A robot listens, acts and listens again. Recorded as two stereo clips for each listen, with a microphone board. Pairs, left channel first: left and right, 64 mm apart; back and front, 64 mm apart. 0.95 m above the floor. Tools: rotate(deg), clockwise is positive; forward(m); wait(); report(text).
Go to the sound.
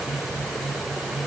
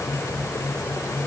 wait()
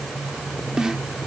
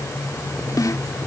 rotate(170)
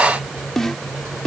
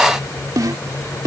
forward(1.0)
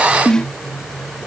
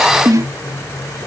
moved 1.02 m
rotate(-15)
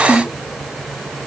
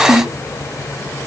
forward(1.0)
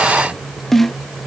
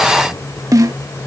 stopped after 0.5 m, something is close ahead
report("I am next to the snare drum.")